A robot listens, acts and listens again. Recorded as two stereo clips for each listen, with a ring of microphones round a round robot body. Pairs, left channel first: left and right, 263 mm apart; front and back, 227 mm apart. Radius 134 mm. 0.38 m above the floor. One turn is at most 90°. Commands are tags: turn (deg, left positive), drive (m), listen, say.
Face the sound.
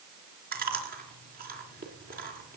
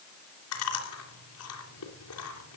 <turn deg="-35"/>
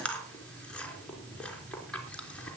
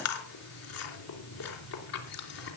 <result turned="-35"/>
<say>Found it: chewing, straight ahead, 2 to 4 m away.</say>